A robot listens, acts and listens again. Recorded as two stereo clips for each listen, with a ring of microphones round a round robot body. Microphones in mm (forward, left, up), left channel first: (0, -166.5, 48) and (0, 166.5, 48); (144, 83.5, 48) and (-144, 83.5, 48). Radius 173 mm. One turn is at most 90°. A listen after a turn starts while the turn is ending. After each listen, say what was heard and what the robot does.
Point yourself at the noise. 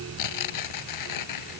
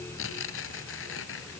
The tearing paper: 55° right. Turn 55° right.
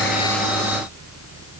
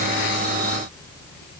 Keep listening.
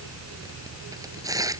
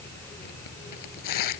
The tearing paper is now 10° left. Turn 10° left.
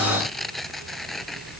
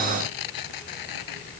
Found it: tearing paper, straight ahead.